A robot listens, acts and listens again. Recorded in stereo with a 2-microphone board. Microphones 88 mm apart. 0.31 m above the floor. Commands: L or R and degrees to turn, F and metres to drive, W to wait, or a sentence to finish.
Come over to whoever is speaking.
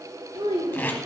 R70
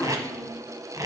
W
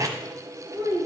R40
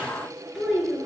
F1.0
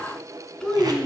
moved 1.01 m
L10
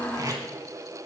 W
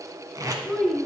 F1.0
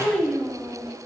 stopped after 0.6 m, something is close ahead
I am next to the child speaking.